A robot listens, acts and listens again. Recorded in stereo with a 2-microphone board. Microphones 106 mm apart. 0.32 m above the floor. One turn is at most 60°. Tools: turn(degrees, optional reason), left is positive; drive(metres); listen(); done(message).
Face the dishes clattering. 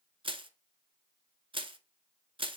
listen()
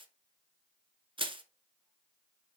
listen()
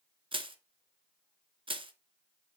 done("I can't make out dishes clattering to turn to.")